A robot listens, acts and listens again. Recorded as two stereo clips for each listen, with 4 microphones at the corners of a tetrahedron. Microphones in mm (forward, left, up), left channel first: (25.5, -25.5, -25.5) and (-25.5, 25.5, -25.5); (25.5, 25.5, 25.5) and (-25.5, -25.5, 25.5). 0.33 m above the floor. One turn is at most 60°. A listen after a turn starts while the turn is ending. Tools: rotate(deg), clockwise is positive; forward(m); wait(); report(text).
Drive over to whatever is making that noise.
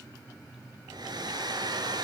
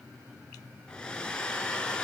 rotate(-60)
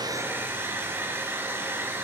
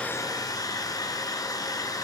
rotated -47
rotate(-60)
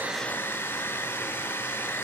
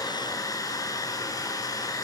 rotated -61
rotate(-15)
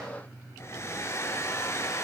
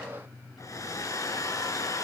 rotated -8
forward(1.0)
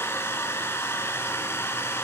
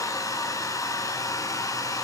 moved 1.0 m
rotate(-10)
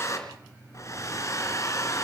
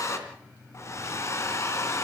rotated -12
forward(1.0)
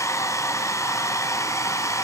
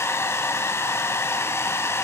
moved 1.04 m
forward(1.0)
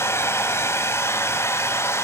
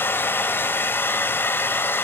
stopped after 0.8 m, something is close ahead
report("Arrived at the hair dryer, straight ahead.")